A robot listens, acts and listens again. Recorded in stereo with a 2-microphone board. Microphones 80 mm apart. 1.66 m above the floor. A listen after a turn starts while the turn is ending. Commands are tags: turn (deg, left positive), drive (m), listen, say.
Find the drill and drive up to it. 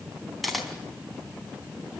<listen/>
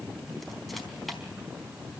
<listen/>
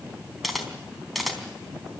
<say>I can't make out a drill, only a camera shutter.</say>